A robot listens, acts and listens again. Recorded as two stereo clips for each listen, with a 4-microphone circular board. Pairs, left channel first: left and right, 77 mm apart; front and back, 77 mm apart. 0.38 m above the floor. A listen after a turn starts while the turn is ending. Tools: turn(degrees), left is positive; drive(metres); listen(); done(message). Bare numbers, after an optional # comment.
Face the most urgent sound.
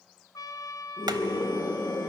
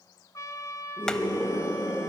# The scream: 105° left.
turn(105)
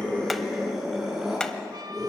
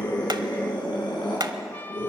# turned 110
done("Found it: a scream, straight ahead.")